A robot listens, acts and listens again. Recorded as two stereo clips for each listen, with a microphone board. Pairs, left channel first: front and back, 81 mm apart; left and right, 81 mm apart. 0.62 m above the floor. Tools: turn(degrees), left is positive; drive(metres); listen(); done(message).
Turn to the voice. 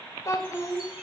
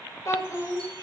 turn(degrees=45)
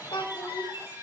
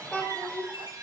turn(degrees=15)
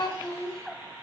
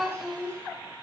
done("Found it: a child speaking, straight ahead.")